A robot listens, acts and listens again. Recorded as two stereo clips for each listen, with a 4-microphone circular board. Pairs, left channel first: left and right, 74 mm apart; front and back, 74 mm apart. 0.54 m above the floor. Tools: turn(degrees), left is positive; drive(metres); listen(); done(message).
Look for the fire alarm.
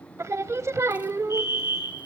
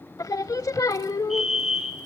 turn(degrees=95)
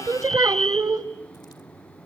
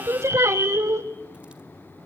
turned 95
done("Facing the fire alarm, 2 to 4 m away.")